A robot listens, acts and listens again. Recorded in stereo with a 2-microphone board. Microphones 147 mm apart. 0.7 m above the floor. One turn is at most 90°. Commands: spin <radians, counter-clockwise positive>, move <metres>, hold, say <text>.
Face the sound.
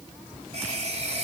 spin -0.87
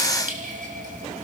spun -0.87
spin -1.40
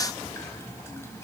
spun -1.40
hold
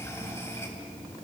spin 0.35
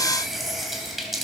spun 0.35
say Found it: a running tap, straight ahead, 2 to 4 m away.